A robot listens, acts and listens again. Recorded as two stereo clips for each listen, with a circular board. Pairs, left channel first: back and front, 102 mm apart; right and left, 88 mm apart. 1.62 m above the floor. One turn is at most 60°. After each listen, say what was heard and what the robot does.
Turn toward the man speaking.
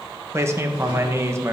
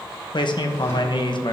The man speaking: 60° right. Turn 60° right.
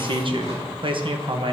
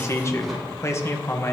The man speaking is now 30° right. Turn 30° right.
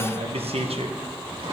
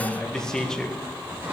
Found it: a man speaking, straight ahead, 1 to 2 m away.